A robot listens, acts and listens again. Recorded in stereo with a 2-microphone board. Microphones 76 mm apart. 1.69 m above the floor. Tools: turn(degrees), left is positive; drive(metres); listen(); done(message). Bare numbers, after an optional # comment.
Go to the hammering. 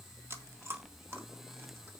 listen()
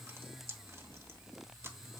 listen()
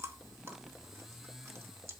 done("I can't make out hammering to turn to.")